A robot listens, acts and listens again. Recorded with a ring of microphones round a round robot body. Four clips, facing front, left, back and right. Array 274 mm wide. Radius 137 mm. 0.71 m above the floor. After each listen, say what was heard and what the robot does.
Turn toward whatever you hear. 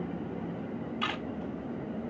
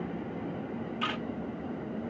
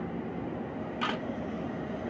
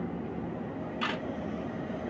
The camera shutter: 165° right. Turn 165° right.
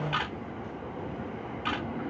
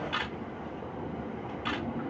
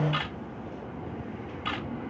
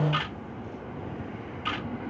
The camera shutter is now 10° left. Turn 10° left.
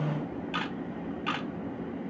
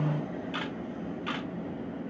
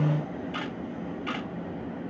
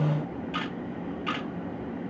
Facing the camera shutter, 2 to 4 m away.